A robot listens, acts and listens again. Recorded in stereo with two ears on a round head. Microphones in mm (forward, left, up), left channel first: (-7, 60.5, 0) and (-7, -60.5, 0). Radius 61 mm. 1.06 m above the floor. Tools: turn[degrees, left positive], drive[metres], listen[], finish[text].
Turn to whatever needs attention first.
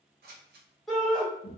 Action: turn[30]
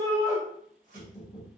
Thought: So it is at 30° right.
Action: turn[-30]
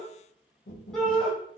Action: finish[Found it: a shout, straight ahead, 1 to 2 m away.]